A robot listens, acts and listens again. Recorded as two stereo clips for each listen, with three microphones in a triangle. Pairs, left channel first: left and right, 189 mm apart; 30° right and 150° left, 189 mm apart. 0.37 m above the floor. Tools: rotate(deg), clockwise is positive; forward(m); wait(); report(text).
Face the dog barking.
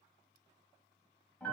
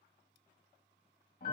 wait()
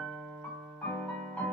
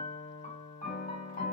wait()
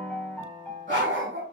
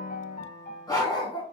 rotate(95)
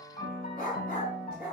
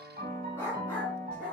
rotate(-55)
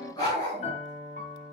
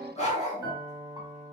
rotate(-25)
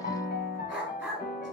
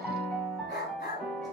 report("Facing the dog barking.")